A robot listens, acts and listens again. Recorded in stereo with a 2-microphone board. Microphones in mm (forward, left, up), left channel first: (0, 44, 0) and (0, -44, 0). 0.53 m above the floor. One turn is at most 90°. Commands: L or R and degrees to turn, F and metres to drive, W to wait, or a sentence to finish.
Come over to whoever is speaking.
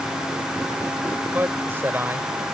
R25
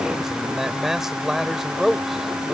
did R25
F1.0
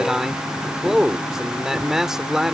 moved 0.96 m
R10
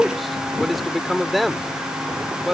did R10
F1.0
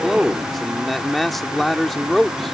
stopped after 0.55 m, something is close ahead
I am next to the man speaking.